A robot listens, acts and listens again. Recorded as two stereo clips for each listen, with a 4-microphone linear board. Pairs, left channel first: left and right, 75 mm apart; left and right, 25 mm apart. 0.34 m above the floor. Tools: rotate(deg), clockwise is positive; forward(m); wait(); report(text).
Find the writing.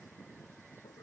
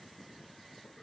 wait()
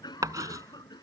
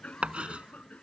rotate(55)
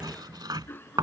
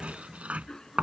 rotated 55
rotate(70)
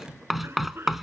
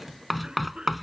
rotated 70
report("Found it: writing, straight ahead.")